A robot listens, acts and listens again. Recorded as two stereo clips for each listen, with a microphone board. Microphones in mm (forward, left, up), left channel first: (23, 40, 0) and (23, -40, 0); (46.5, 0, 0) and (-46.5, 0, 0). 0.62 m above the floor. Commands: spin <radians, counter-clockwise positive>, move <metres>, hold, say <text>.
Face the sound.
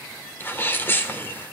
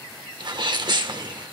spin 2.62
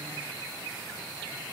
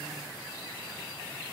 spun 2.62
say I heard a sneeze from this way, but can't make it out now.